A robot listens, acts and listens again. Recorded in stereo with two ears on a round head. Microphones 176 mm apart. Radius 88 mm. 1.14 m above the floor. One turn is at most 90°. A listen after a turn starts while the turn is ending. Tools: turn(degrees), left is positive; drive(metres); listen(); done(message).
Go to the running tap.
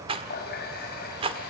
turn(degrees=50)
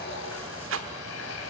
turn(degrees=80)
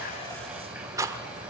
listen()
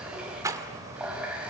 drive(metres=1.0)
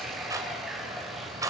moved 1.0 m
drive(metres=1.0)
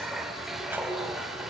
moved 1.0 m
drive(metres=1.0)
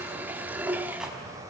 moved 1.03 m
turn(degrees=-10)
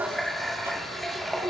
drive(metres=1.0)
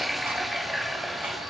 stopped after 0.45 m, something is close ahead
done("Arrived at the running tap, straight ahead.")